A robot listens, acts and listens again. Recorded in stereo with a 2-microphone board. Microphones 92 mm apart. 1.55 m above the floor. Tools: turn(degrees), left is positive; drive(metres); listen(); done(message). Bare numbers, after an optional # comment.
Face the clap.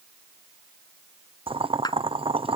# The clap: about 50° left or 130° left.
turn(50)
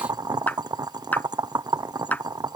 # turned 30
# So it is at 20° left.
turn(20)
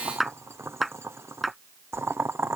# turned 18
done("Found it: a clap, straight ahead.")